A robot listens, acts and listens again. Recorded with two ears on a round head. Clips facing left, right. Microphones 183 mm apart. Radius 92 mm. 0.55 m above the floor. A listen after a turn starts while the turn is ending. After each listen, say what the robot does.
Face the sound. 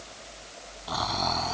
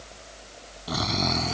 Turn 30° right.
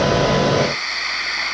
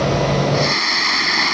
Turn 115° right.
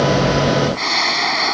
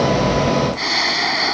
Facing the snoring.